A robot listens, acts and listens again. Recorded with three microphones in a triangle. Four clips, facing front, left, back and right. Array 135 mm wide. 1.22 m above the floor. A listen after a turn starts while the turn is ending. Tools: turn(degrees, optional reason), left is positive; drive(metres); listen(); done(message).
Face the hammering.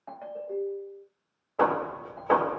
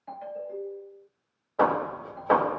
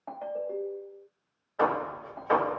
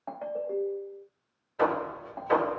turn(degrees=50, reason="The hammering: 50° left.")
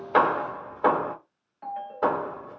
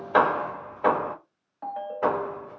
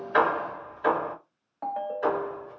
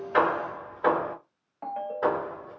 turn(degrees=10, reason="The hammering is now 10° left.")
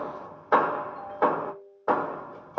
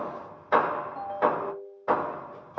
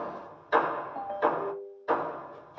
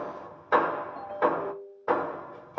done("Facing the hammering, under 1 m away.")